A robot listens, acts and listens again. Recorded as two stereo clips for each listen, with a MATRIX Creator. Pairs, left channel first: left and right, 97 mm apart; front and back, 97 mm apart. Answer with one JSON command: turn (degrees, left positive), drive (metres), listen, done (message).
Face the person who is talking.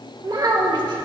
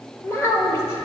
{"turn": -55}
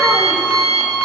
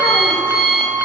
{"listen": true}
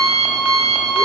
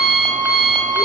{"listen": true}
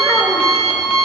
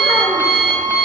{"done": "I heard a child speaking from this way, but can't make it out now."}